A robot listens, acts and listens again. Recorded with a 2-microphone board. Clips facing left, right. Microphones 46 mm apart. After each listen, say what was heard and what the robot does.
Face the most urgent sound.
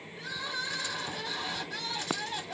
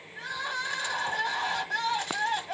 The crying: about 65° right or 115° right. Turn 65° right.
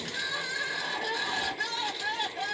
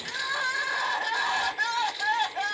So it is at 45° right. Turn 45° right.
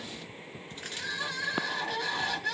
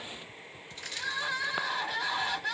Facing the crying.